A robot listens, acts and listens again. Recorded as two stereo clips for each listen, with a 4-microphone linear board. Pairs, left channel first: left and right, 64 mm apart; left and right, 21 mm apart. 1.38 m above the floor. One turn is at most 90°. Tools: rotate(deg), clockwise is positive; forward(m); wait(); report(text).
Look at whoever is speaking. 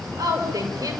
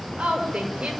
rotate(70)
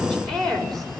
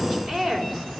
rotate(-10)
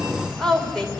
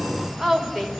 report("Facing the woman speaking, over 4 m away.")